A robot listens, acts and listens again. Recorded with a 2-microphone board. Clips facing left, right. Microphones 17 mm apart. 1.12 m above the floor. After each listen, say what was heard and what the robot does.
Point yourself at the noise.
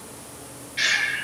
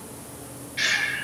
Turn 30° left.
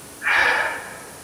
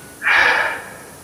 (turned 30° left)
So it is at 15° right. Turn 15° right.
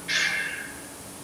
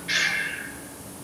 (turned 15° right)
Facing the breathing, under 1 m away.